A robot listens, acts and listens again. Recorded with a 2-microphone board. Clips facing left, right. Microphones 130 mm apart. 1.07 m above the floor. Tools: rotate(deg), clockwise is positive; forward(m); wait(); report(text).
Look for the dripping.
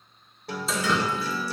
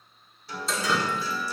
rotate(-30)
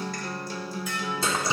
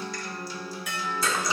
rotate(-150)
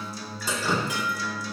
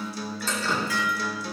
rotate(-15)
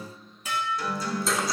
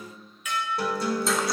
wait()
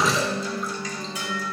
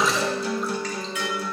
report("Facing the dripping.")